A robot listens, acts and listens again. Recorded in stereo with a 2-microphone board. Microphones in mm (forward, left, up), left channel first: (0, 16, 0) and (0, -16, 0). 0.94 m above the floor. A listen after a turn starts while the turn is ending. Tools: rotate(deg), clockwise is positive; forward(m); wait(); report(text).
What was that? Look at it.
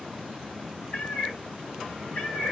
rotate(-60)
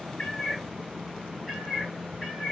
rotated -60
report("Facing the cat meowing.")